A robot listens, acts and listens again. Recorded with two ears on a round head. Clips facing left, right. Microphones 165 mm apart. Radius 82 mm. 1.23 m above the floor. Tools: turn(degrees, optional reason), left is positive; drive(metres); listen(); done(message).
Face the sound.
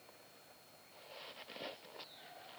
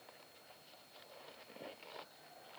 listen()
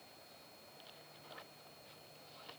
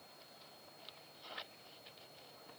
listen()
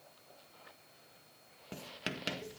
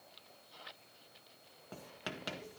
turn(degrees=30, reason="The writing: about 30° left or 150° left.")
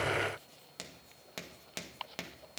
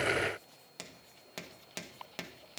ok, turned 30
done("Found it: writing, straight ahead.")